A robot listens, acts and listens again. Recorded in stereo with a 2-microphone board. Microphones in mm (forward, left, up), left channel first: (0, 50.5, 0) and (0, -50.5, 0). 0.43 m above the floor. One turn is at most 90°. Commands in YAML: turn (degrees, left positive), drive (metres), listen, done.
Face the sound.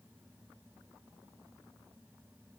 listen: true
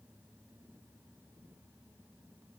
listen: true
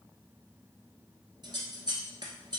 turn: -45
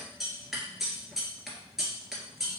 done: "Facing the scissors."